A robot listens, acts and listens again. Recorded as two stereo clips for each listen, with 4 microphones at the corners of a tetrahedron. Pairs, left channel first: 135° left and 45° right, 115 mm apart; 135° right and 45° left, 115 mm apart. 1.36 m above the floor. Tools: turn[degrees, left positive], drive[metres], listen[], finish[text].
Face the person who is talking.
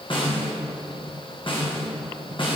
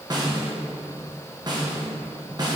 Action: listen[]
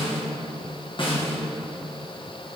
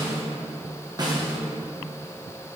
Action: listen[]
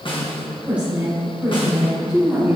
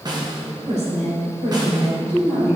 Thought: The woman speaking: 40° left.
Action: turn[40]
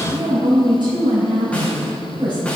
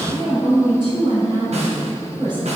Action: finish[Facing the woman speaking.]